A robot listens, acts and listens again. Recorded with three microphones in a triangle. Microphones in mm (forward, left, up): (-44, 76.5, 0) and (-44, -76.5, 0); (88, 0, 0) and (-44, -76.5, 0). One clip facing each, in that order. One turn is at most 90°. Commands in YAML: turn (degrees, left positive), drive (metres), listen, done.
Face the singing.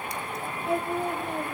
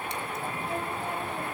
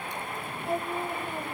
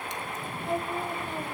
turn: 90
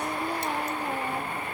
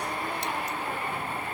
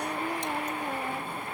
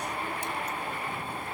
turn: 25
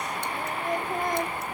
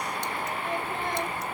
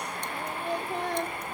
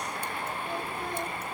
turn: 45
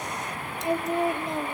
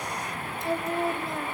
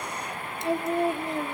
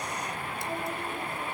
turn: 20
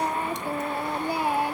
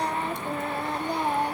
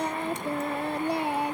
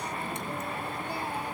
turn: 10
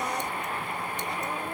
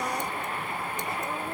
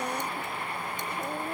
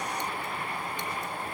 listen: true
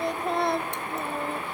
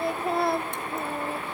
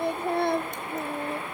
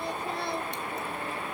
done: "Found it: singing, straight ahead."